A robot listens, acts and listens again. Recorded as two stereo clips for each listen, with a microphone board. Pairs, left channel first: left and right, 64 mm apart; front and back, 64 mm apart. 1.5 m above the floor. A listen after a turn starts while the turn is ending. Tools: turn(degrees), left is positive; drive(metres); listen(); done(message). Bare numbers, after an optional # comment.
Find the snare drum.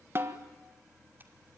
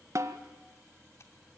# The snare drum: 145° right.
turn(-145)
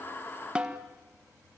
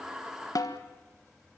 # The snare drum is now 15° right.
turn(-15)
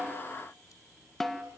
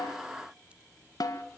done("Facing the snare drum, 1 to 2 m away.")